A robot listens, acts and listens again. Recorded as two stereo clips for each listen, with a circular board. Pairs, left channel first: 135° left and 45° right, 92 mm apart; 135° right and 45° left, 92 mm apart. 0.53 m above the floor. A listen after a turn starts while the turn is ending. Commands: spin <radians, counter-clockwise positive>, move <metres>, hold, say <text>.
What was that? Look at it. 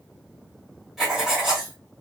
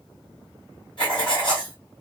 spin -2.27
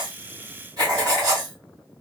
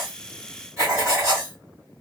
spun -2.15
spin -0.17
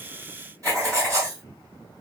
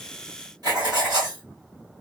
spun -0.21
say Found it: writing, straight ahead, 2 to 4 m away.